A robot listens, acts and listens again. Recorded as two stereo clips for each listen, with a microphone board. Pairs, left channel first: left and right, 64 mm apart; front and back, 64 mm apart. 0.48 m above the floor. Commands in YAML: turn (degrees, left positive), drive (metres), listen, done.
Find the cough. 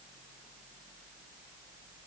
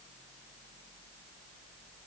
listen: true
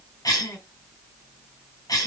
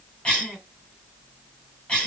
turn: 75
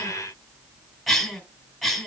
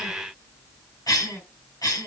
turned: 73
done: "Found it: a cough, straight ahead, 2 to 4 m away."